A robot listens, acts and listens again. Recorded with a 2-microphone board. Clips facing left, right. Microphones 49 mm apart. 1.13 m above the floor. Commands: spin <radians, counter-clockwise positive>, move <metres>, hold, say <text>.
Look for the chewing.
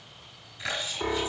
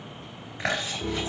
spin -0.79
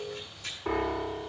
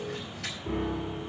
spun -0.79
spin -1.57
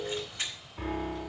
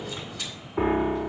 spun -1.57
spin 0.52
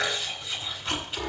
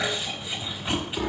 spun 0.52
spin -0.26
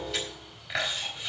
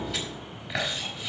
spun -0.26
say Facing the chewing, over 4 m away.